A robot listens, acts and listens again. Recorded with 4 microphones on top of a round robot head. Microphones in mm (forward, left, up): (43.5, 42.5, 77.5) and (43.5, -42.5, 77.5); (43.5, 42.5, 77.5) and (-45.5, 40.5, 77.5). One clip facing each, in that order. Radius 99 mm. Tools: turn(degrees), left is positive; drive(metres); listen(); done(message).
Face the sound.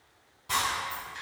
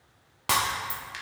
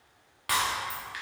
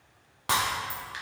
turn(degrees=-110)
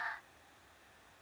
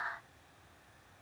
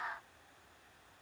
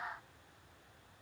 done("Facing where the breaking glass came from. I can't hear it now.")